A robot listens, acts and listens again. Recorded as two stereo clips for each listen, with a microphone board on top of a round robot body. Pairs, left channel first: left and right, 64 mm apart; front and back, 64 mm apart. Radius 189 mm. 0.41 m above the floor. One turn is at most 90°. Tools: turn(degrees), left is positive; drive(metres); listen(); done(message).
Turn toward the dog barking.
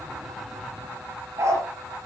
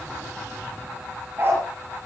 turn(degrees=-90)
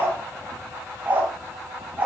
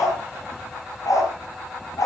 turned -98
turn(degrees=-20)
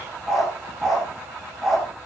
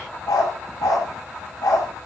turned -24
done("Facing the dog barking.")